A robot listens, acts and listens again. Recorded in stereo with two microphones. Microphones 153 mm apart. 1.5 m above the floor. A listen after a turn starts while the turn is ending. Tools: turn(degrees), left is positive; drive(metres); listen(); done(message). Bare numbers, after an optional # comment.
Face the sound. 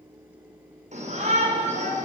# The shout: about 50° right or 130° right.
turn(-50)
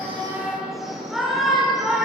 done("Found it: a shout, straight ahead, over 4 m away.")